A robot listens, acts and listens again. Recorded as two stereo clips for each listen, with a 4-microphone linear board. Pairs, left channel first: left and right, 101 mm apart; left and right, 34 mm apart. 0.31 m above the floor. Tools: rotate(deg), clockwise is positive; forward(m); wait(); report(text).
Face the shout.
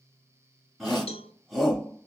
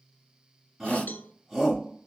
rotate(-30)
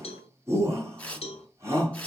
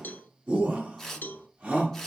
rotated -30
rotate(30)
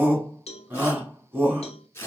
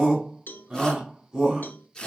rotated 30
rotate(20)
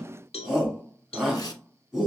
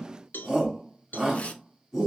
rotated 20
report("Found it: a shout, straight ahead, 2 to 4 m away.")